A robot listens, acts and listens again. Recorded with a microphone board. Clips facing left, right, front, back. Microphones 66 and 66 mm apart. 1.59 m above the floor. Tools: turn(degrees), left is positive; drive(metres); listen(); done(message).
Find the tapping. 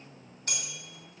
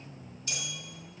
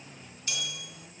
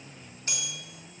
listen()
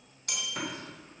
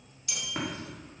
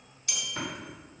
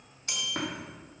turn(degrees=-145)
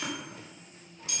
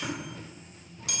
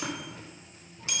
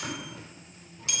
listen()
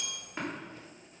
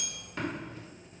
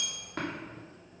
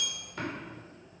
turn(degrees=15)
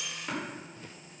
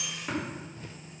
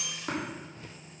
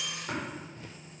done("Found it: tapping, straight ahead.")